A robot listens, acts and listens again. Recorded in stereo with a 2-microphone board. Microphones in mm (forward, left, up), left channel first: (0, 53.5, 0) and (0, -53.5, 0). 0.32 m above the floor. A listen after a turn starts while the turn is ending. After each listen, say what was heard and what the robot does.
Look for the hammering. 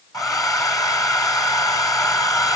Keep listening.
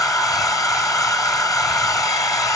Keep listening.
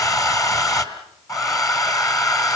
I can't make out hammering, only a hair dryer.